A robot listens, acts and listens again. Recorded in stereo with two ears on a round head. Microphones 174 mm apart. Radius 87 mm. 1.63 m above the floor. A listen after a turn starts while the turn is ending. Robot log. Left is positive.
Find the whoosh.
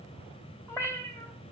cmd idle
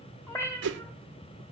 note: The whoosh: about 60° right or 120° right.
cmd yaw -60
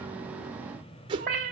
note: So it is at 30° right.
cmd yaw -30
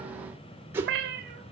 note: The whoosh is now 15° right.
cmd yaw -15
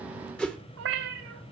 end: Facing the whoosh, 1 to 2 m away.